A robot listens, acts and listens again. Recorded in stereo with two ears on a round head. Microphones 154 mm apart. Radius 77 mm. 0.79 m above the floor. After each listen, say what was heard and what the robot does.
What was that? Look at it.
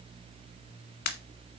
The pop: about 55° left or 125° left. Turn 55° left.
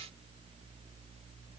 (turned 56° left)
Keep listening.
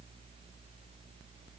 I heard a pop, but can't make it out now. It was about straight ahead or 70° left.